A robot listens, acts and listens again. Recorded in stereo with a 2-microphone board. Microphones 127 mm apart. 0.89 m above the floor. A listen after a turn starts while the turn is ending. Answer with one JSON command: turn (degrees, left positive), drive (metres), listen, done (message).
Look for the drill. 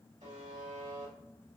{"listen": true}
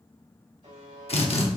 {"turn": 50}
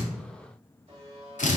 {"turn": 80}
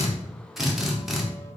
{"done": "Facing the drill, under 1 m away."}